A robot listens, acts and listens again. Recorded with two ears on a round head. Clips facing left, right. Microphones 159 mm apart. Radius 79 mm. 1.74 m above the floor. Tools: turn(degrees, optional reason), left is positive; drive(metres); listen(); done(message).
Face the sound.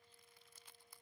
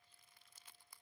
listen()
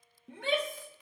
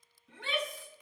turn(degrees=45, reason="The shout: about 45° left or 135° left.")
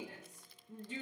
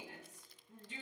turn(degrees=85, reason="So it is at 85° left.")
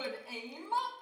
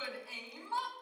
turn(degrees=20, reason="The shout is now 20° left.")
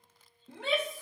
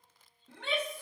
done("Found it: a shout, straight ahead.")